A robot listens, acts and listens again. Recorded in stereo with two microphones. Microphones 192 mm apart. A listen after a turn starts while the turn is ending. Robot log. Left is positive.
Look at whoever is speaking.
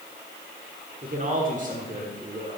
note: The man speaking: about 45° right or 135° right.
cmd yaw -45
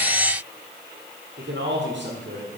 note: So it is at 90° right.
cmd yaw -90
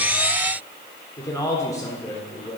note: The man speaking is now 20° left.
cmd yaw +20
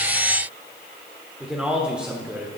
end: Facing the man speaking, 1 to 2 m away.